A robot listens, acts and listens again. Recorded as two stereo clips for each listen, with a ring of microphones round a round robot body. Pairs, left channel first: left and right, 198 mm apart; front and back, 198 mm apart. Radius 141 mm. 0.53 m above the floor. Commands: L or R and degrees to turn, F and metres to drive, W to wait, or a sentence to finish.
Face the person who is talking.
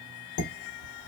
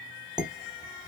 W
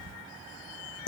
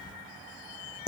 W
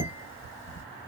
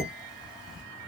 I can't make out anyone speaking, only dishes clattering.